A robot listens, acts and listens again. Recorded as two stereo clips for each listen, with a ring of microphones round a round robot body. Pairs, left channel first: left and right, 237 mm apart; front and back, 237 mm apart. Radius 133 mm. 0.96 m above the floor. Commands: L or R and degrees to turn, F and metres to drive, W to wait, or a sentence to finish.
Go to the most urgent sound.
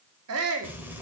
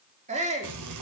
R115
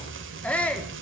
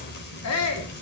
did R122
F1.0
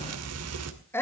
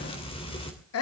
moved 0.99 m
L10
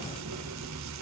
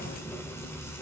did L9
W
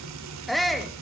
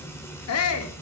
F1.0
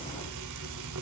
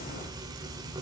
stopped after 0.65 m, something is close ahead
W
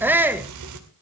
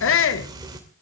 R10
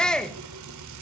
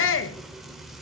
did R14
I am next to the shout.